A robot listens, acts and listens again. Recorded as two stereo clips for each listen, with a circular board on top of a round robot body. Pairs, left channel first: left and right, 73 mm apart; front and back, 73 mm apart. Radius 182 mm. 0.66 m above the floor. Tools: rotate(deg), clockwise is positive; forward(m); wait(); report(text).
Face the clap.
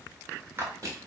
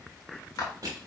rotate(35)
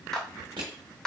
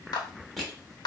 rotate(-10)
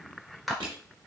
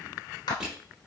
report("Found it: a clap, straight ahead.")